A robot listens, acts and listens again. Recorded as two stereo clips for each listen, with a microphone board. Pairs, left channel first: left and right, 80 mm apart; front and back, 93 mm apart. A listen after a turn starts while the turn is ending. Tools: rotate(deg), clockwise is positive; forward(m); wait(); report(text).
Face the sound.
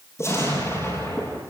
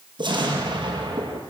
rotate(-145)
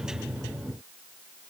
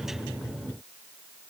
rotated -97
rotate(-45)
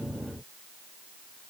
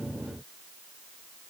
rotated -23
rotate(-25)
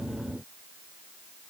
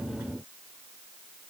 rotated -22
report("I heard an explosion from this way, but can't make it out now.")